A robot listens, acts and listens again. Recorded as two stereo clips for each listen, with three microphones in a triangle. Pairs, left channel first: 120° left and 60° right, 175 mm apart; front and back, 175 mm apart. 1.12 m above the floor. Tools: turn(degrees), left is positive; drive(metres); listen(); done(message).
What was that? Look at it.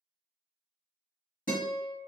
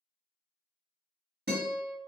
turn(degrees=160)
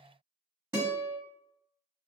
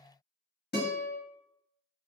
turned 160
turn(degrees=15)
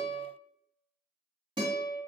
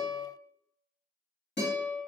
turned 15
done("Found it: a guitar, straight ahead.")